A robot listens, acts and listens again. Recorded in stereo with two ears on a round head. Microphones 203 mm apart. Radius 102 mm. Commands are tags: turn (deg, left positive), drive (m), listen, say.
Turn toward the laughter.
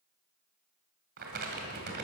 <listen/>
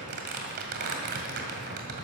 <listen/>
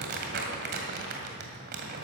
<say>I can't make out laughter to turn to.</say>